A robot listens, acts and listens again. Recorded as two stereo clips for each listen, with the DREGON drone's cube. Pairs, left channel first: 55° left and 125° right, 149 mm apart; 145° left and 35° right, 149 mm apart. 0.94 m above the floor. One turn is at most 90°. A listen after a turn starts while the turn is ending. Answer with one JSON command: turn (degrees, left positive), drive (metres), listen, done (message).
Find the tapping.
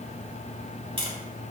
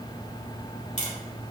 {"turn": -90}
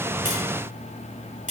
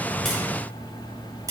{"turn": -90}
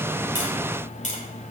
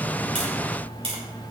{"turn": 15}
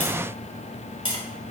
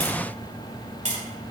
{"done": "Facing the tapping, 2 to 4 m away."}